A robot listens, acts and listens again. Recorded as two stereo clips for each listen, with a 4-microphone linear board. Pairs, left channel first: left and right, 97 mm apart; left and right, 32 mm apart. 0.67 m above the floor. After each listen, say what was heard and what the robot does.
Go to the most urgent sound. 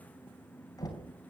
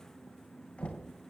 Keep listening.
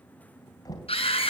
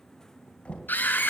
Turn 90° left.
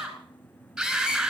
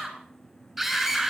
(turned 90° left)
Drive 1.0 m forward.
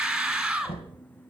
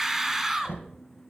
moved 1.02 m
Drive 1.0 m forward.
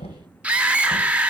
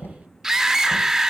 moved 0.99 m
The scream is now 15° right. Turn 15° right.
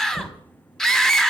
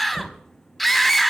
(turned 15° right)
Drive 1.0 m forward.
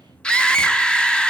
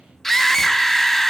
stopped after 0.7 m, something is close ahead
The scream is now 10° left. Turn 10° left.
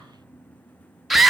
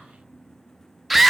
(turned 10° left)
Arrived at the scream, straight ahead.